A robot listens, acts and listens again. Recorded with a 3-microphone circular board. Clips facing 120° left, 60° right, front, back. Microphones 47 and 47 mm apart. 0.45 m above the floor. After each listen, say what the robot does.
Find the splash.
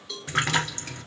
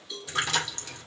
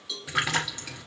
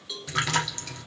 Turn 75° left.
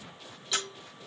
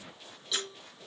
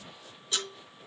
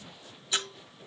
Facing where the splash came from. I can't hear it now.